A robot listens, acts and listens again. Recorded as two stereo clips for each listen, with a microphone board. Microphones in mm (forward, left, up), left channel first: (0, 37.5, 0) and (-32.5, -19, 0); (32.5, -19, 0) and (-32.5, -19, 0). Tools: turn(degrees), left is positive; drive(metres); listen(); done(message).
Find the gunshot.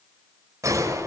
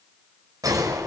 turn(degrees=-160)
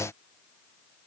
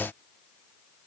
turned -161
done("I heard a gunshot from this way, but can't make it out now.")